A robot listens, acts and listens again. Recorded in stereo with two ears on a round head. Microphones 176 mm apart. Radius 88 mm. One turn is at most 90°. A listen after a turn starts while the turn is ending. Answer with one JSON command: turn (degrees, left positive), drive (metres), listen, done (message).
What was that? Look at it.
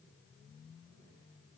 {"listen": true}
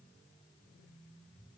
{"listen": true}
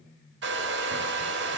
{"turn": -55}
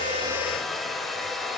{"done": "Found it: a hair dryer, straight ahead, 1 to 2 m away."}